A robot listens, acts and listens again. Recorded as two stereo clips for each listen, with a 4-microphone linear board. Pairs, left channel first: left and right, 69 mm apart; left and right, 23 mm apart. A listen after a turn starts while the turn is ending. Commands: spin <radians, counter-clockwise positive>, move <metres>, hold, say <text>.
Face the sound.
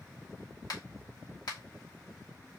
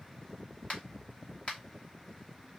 spin 1.22
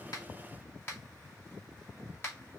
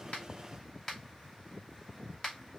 spin 0.61
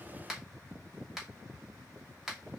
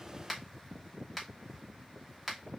say Facing the finger snap.